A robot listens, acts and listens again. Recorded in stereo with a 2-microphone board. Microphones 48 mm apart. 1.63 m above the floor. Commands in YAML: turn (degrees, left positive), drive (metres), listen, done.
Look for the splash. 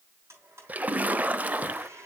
turn: -30
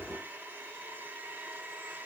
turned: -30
listen: true
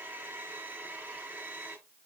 done: "I heard a splash, but can't make it out now. It was about straight ahead or 120° right."